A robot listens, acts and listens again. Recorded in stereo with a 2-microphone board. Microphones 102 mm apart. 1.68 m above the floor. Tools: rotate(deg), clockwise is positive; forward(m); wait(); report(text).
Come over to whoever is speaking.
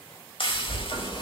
rotate(20)
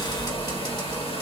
forward(1.0)
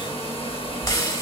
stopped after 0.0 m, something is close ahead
report("Blocked. The child speaking is further on, straight ahead.")